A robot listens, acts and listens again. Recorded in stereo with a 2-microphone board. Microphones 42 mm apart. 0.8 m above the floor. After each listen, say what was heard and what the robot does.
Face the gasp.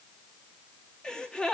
The gasp: about 20° left or 160° left. Turn 20° left.
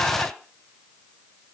So it is at 135° left. Turn 135° left.
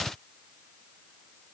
Facing where the gasp came from. I can't hear it now.